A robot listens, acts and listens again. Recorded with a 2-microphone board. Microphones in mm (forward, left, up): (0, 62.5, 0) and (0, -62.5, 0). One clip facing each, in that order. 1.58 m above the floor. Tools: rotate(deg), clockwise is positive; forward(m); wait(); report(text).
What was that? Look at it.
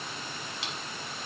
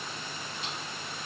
rotate(-90)
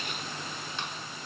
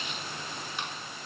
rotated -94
wait()
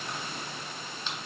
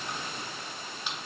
rotate(10)
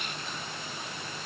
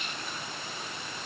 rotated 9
wait()
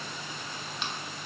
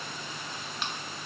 report("Facing the chewing, under 1 m away.")